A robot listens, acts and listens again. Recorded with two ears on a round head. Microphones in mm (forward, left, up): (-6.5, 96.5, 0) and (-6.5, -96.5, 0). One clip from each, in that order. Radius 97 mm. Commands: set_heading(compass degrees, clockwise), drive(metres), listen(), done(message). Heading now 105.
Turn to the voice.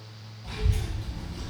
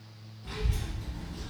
set_heading(150)
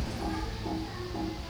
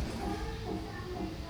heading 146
set_heading(241)
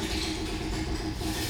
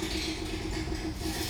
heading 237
done("Found it: a child speaking, straight ahead.")